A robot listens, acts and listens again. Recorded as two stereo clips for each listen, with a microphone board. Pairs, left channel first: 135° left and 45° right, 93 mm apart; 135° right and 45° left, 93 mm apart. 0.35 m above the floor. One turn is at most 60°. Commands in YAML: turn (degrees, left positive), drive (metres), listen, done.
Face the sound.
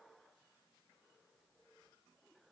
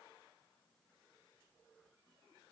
listen: true
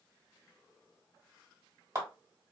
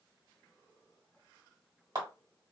turn: 10
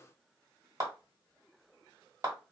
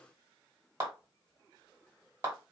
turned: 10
done: "Found it: a clap, straight ahead, 1 to 2 m away."